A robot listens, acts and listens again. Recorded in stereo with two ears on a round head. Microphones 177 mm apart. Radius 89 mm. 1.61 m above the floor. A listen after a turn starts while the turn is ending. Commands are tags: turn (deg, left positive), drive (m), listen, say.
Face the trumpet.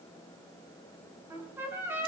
<turn deg="-30"/>
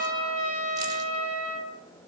<turn deg="-135"/>
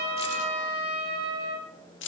<turn deg="-25"/>
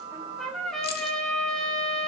<say>Facing the trumpet, over 4 m away.</say>